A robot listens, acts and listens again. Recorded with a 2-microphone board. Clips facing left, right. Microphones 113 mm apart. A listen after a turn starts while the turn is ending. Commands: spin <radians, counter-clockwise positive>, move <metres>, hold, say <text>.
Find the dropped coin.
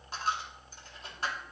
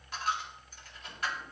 spin 0.52
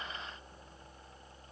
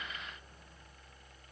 hold
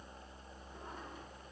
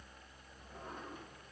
say I heard a dropped coin, but can't make it out now. It was about straight ahead or 120° left.